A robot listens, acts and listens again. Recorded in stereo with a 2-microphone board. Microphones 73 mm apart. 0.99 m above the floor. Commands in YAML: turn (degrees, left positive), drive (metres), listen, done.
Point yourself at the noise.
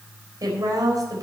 turn: -55
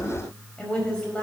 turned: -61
turn: 15
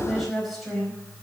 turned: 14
done: "Found it: a woman speaking, straight ahead."